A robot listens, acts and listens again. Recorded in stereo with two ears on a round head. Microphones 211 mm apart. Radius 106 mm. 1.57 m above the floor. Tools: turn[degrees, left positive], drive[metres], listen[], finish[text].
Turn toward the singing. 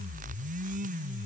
Action: listen[]
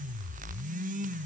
Action: listen[]
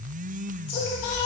Thought: The singing: about 45° left or 135° left.
Action: turn[45]
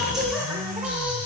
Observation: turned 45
Action: finish[Found it: singing, straight ahead, 1 to 2 m away.]